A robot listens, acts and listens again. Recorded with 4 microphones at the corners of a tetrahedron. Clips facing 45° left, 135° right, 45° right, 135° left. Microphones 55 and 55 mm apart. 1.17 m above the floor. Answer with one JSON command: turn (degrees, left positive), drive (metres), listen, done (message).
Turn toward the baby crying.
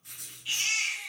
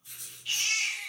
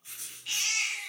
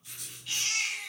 {"turn": -30}
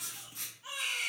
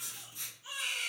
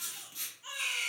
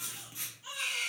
{"turn": 20}
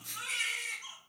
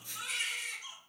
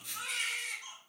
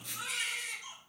{"done": "Found it: a baby crying, straight ahead."}